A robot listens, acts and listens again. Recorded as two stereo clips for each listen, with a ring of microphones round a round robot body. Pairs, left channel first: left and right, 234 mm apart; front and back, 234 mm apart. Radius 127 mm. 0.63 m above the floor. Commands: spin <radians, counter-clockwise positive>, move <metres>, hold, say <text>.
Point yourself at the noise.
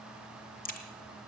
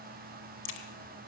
spin 0.61
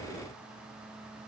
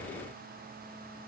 say Facing where the crack came from. I can't hear it now.